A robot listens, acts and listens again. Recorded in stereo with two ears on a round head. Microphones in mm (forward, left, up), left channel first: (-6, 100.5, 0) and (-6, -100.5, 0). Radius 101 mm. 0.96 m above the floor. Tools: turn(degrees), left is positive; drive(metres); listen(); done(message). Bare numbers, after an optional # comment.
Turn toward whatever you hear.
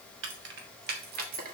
# The keys jangling: about 40° right or 140° right.
turn(-40)
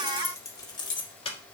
# So it is at 25° left.
turn(25)
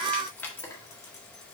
# The keys jangling is now 15° left.
turn(15)
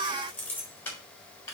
# The keys jangling is now 10° left.
turn(10)
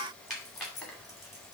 done("Found it: keys jangling, straight ahead, 2 to 4 m away.")